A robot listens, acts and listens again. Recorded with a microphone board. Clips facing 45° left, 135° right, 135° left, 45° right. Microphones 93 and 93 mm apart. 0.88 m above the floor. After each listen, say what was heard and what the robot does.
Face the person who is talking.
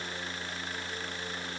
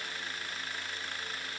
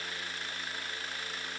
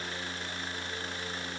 Keep listening.
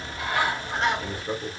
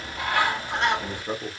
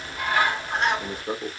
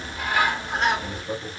The man speaking: 160° left. Turn 160° left.
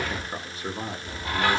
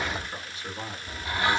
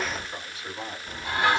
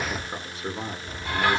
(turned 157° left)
Found it: a man speaking, straight ahead.